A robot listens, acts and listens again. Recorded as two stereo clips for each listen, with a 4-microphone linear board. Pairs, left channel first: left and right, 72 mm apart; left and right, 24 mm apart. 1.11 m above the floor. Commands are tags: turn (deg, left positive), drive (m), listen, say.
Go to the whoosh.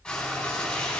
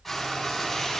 <listen/>
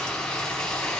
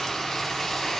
<listen/>
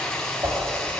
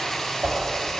<turn deg="-45"/>
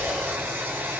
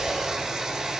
<listen/>
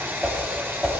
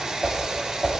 <drive m="1.0"/>
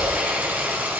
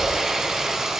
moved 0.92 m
<listen/>
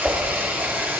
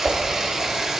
<turn deg="-10"/>
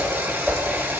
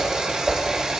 <drive m="1.0"/>
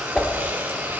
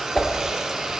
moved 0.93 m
<drive m="1.0"/>
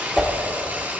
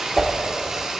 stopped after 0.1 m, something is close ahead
<say>Arrived at the whoosh, straight ahead.</say>